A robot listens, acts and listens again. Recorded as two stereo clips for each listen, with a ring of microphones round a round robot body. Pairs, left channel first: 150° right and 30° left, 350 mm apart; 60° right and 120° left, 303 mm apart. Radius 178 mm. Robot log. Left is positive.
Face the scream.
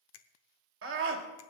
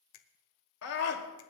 note: The scream: 25° right.
cmd yaw -25
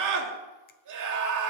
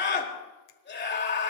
end: Found it: a scream, straight ahead.